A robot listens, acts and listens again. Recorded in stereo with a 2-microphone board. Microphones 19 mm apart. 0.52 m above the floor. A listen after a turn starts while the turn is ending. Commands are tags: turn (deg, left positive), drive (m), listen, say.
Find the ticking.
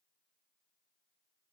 <listen/>
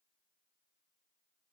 <listen/>
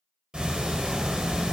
<turn deg="-60"/>
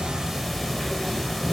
<say>Facing the ticking.</say>